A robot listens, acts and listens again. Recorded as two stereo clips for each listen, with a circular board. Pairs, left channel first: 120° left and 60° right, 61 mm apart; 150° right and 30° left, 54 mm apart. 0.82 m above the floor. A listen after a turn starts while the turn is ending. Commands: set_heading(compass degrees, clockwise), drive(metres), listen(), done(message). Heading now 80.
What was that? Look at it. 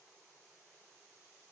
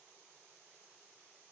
listen()
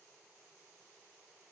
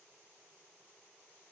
listen()
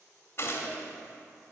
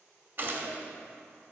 set_heading(5)
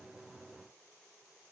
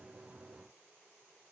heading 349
set_heading(4)
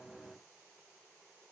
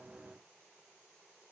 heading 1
done("I heard a gunshot from this way, but can't make it out now.")